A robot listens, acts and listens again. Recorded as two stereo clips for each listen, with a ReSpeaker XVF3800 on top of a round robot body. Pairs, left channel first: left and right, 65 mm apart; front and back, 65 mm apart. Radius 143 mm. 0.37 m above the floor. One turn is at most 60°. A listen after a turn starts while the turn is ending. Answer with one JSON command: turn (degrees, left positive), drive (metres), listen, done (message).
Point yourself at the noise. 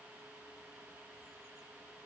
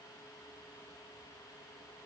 {"listen": true}
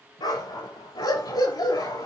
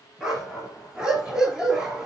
{"turn": 60}
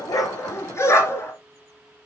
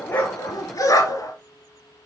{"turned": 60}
{"turn": 45}
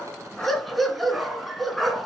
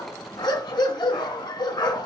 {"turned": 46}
{"done": "Facing the dog barking, 1 to 2 m away."}